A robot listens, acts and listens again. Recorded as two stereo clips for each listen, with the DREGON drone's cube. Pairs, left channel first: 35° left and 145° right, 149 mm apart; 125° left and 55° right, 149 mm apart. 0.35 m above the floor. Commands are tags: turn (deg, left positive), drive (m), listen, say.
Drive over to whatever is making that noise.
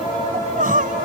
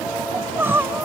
<turn deg="-130"/>
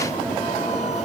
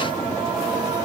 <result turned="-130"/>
<listen/>
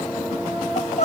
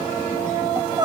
<drive m="1.0"/>
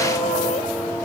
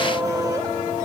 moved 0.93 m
<listen/>
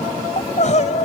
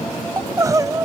<turn deg="10"/>
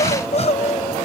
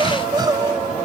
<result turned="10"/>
<drive m="1.0"/>
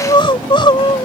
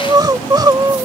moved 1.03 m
<drive m="1.0"/>
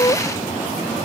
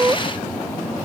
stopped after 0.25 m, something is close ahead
<say>Arrived at the crying, straight ahead.</say>